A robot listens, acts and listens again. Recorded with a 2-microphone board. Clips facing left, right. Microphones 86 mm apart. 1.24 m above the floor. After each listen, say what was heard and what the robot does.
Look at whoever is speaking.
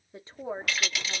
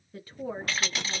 The woman speaking: about 25° left or 155° left. Turn 25° left.
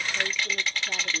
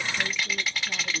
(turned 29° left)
So it is at 125° left. Turn 125° left.
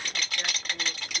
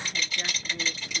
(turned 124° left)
Found it: a woman speaking, straight ahead.